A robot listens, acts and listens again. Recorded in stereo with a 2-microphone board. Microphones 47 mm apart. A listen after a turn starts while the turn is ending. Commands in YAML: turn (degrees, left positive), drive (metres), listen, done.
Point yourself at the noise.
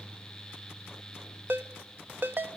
turn: -45
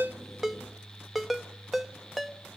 done: "Facing the ringtone."